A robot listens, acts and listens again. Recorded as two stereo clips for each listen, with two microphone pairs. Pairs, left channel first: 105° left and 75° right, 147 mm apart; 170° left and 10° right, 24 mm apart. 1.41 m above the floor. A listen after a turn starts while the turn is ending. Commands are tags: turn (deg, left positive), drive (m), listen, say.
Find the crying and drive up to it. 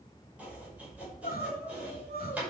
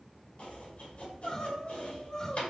<turn deg="115"/>
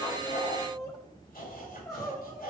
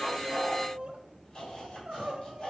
<turn deg="35"/>
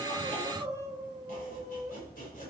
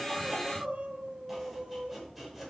<drive m="1.0"/>
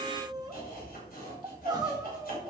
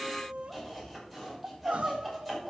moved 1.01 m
<turn deg="-15"/>
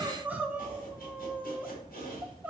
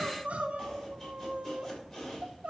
<drive m="1.0"/>
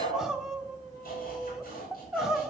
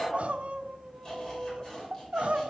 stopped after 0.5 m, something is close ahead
<turn deg="10"/>
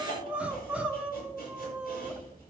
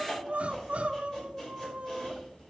<say>I am next to the crying.</say>